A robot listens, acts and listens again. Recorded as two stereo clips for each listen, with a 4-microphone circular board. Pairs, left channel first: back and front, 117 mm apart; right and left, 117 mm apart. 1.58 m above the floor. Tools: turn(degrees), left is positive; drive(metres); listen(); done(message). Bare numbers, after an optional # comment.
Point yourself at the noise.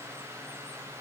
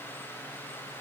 listen()
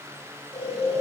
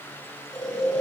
# The snoring: 175° right.
turn(-175)
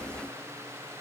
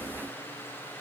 listen()
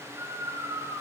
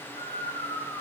# The snoring is now 55° right.
turn(-55)
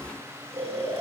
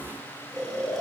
done("Facing the snoring, 2 to 4 m away.")